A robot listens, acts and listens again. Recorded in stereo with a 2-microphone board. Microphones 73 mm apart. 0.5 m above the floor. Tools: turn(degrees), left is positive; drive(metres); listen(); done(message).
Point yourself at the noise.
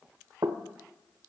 turn(degrees=-60)
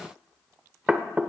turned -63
turn(degrees=-15)
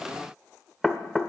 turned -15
done("Found it: knocking, straight ahead.")